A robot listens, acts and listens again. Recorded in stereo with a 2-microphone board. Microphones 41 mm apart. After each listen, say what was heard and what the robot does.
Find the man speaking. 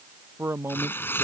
Turn 90° right.
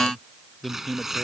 So it is at 15° left. Turn 15° left.
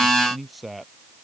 Found it: a man speaking, straight ahead.